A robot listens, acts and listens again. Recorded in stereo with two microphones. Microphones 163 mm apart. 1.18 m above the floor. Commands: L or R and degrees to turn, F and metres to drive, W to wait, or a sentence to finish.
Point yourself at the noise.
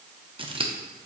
R30
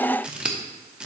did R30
Facing the scissors.